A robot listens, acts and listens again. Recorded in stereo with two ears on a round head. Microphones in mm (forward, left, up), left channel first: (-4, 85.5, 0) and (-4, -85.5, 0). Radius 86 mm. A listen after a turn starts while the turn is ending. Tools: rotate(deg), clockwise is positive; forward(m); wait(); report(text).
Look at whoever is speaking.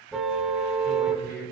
rotate(-50)
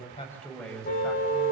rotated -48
report("Found it: a man speaking, straight ahead.")